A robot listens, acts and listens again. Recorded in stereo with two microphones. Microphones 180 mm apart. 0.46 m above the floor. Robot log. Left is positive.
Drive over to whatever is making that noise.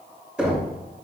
cmd yaw -30
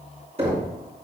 note: So it is at 145° right.
cmd yaw -145
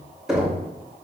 cmd fwd 1.0
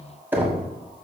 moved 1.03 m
note: The knocking is now 10° right.
cmd yaw -10
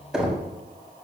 cmd fwd 1.0
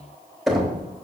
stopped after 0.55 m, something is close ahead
end: Arrived at the knocking, straight ahead.